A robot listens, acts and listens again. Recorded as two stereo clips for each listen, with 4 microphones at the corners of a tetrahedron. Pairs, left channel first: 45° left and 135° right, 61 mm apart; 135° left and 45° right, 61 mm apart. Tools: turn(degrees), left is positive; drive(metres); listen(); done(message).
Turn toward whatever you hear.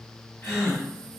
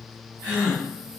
turn(degrees=85)
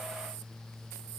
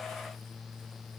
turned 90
done("I heard a gasp from this way, but can't make it out now.")